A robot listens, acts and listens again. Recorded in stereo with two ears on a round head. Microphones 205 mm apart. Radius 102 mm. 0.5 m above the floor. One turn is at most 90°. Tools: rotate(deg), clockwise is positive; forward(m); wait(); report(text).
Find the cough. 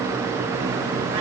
wait()
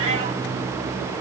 wait()
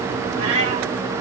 report("I can't make out a cough to turn to.")